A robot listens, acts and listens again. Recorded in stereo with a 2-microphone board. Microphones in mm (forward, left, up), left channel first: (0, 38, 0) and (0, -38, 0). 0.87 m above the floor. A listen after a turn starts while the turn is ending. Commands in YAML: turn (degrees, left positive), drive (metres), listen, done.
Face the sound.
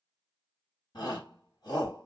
turn: 70
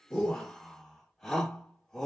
done: "Facing the shout."